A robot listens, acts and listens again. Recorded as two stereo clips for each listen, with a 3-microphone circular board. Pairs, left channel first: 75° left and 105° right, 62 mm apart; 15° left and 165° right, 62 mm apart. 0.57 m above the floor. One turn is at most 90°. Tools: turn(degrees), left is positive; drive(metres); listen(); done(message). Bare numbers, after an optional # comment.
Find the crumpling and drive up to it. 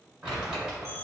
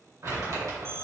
# The crumpling: 175° right.
turn(-90)
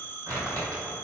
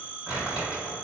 # The crumpling is now 90° right.
turn(-90)
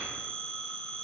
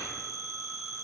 listen()
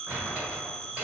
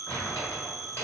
# The crumpling is now 35° right.
turn(-35)
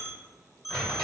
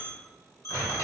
# The crumpling is now 15° left.
turn(15)
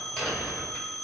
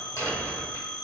drive(1.0)
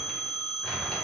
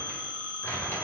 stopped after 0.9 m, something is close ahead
listen()
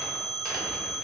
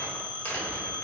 listen()
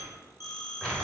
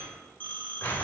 done("I am next to the crumpling.")